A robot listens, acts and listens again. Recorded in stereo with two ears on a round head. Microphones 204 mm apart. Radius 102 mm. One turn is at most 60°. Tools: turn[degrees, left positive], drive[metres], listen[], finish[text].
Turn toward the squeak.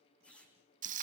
Action: turn[30]
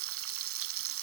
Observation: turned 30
Action: listen[]
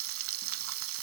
Action: listen[]
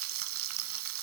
Action: finish[I heard a squeak, but can't make it out now. It was about 25° right or 145° left.]